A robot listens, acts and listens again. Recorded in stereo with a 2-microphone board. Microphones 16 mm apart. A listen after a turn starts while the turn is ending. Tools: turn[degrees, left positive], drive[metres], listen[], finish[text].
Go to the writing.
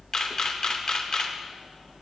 Action: listen[]
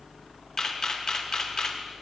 Action: listen[]
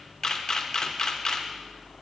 Action: finish[I can't make out writing, only a camera shutter.]